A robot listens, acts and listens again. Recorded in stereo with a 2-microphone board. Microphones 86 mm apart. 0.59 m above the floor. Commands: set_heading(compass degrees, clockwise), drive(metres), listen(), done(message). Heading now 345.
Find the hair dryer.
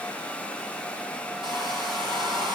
set_heading(45)
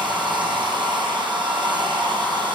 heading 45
set_heading(105)
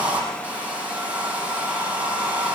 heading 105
set_heading(120)
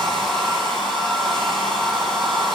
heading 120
done("Facing the hair dryer, over 4 m away.")